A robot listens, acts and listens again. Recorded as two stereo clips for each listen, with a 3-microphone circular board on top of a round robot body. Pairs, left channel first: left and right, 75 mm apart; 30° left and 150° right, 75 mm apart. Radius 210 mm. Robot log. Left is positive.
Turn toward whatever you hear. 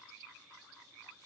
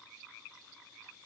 cmd idle
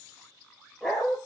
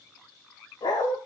end: Facing the dog barking.